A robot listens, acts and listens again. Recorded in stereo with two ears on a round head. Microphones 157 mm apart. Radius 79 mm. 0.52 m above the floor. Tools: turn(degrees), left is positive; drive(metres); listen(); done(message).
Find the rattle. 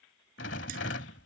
turn(degrees=70)
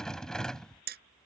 done("Facing the rattle.")